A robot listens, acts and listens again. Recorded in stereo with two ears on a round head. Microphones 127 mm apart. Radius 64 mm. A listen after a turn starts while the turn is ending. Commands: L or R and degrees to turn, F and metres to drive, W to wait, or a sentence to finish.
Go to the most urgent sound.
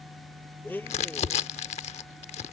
W
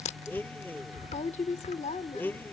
W
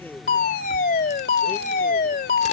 L65
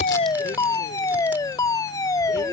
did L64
L25
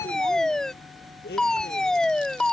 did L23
F1.0
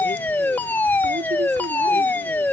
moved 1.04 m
L15
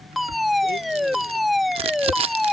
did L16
F1.0
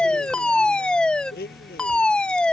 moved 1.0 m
L10
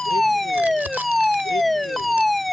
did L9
F1.0
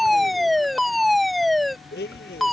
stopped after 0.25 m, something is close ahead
I am next to the fire alarm.